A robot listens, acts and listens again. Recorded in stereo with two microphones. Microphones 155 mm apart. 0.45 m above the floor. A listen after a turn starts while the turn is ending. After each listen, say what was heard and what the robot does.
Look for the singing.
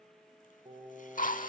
The singing: about 30° right or 150° right. Turn 30° right.
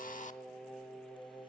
So it is at 10° left. Turn 10° left.
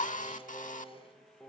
The singing is now 15° left. Turn 15° left.
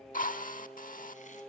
Found it: singing, straight ahead.